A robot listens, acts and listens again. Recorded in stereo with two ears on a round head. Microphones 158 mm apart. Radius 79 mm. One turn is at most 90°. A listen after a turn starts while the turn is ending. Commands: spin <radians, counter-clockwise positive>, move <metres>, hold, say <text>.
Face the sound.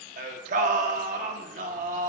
spin -0.87
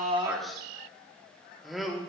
say Found it: singing, straight ahead.